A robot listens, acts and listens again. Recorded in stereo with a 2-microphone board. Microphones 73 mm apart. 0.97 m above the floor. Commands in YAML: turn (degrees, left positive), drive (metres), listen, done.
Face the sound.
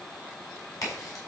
turn: 55
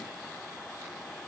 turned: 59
listen: true
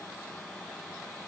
done: "I heard a crack, but can't make it out now. It was about 5° right or 65° left."